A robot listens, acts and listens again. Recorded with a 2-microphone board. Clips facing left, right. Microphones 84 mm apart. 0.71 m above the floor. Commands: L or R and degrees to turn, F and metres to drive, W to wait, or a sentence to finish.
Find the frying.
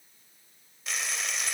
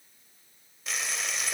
L30
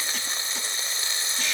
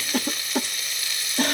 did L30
L150
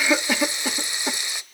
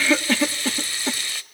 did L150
L20
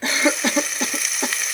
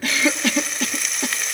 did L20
Facing the frying.